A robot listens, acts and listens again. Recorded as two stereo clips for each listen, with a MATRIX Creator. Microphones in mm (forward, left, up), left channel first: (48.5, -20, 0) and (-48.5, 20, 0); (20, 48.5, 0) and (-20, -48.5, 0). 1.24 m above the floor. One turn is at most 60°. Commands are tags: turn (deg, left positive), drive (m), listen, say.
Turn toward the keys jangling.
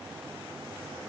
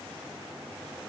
<listen/>
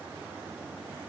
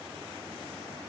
<listen/>
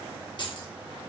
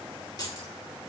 <turn deg="20"/>
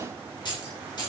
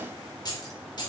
<turn deg="25"/>
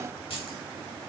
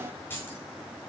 <say>Found it: keys jangling, straight ahead.</say>